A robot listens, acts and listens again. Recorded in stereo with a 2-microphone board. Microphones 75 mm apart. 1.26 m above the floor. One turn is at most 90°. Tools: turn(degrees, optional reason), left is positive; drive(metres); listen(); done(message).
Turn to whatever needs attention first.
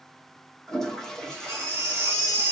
turn(degrees=-35, reason="The baby crying: about 35° right or 145° right.")
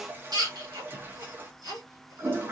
turn(degrees=-90, reason="So it is at 110° right.")
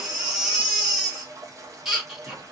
done("Found it: a baby crying, straight ahead, 1 to 2 m away.")